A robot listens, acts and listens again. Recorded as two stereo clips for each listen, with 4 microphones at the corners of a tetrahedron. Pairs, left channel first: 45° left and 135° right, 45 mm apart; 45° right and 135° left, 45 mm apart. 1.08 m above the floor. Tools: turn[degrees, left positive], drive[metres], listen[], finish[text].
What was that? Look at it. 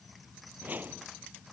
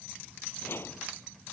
Thought: The whoosh: 85° right.
Action: turn[-85]
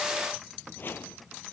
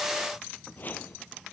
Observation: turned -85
Action: finish[Found it: a whoosh, straight ahead.]